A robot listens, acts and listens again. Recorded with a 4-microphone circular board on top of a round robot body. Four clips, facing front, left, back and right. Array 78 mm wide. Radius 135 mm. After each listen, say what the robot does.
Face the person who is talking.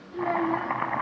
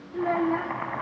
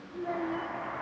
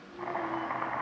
Turn 65° left.
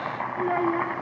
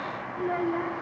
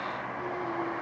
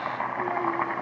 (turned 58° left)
Keep listening.
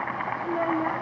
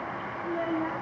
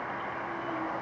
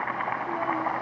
Keep listening.
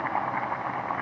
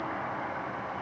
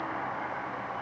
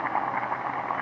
Facing where the child speaking came from. I can't hear it now.